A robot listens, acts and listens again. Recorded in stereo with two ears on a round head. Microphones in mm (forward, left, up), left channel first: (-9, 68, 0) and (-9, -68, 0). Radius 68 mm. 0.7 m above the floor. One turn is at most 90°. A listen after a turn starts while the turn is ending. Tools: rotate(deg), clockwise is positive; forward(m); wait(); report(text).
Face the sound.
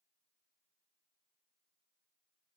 wait()
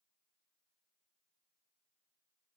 wait()
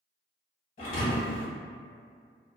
rotate(-50)
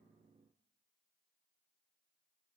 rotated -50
wait()
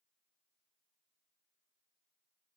report("I heard a thud, but can't make it out now. It was about straight ahead or 80° left.")